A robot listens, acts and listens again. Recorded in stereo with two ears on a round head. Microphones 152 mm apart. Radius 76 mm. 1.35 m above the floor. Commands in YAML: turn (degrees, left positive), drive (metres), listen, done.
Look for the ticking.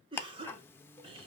turn: 30
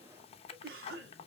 turn: 135
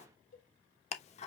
turn: 50
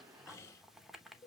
done: "Found it: ticking, straight ahead."